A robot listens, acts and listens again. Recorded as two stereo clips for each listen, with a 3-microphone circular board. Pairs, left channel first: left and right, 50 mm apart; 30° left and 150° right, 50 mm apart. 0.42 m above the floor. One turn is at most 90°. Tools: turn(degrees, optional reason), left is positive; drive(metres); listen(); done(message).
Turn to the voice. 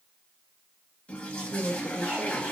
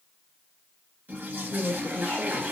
turn(degrees=-40, reason="The woman speaking: 40° right.")
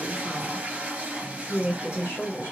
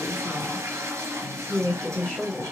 turn(degrees=70, reason="The woman speaking is now 70° left.")
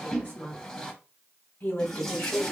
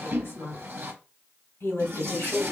turn(degrees=50, reason="The woman speaking is now 50° left.")
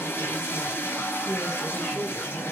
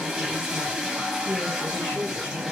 turn(degrees=10, reason="The woman speaking is now 10° left.")
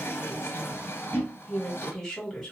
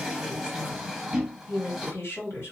turn(degrees=10, reason="The woman speaking is now 10° left.")
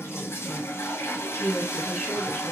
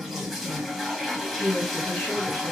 done("Facing the woman speaking, 1 to 2 m away.")